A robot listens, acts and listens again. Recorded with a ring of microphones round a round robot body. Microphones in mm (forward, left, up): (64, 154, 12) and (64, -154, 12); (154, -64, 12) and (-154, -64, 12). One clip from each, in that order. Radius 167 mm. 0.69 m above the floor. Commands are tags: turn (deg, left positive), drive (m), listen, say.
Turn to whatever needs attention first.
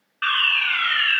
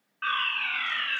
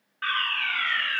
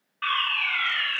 <turn deg="105"/>
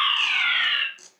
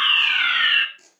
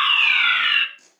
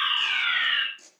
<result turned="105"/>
<turn deg="-25"/>
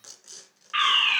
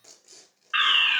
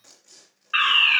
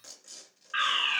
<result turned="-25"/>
<say>Facing the fire alarm.</say>